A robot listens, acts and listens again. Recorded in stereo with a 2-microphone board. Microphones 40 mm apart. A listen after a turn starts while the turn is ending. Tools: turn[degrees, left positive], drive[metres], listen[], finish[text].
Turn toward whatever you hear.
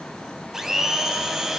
Action: turn[-30]
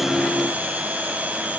Thought: So it is at 140° right.
Action: turn[-140]
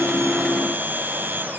Thought: The blender is now 55° right.
Action: turn[-55]
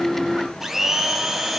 Thought: The blender is now 10° right.
Action: turn[-10]
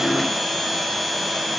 Action: finish[Found it: a blender, straight ahead.]